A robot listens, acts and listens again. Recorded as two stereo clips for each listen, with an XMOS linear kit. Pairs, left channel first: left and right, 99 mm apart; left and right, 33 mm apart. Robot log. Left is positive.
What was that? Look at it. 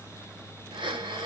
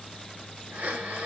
note: The breathing: about 55° right or 125° right.
cmd yaw -55
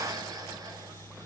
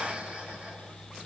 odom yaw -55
cmd idle
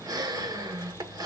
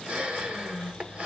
note: So it is at 50° right.
cmd yaw -50
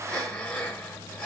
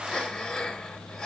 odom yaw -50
note: The breathing is now 10° left.
cmd yaw +10
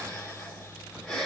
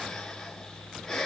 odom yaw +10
end: Facing the breathing.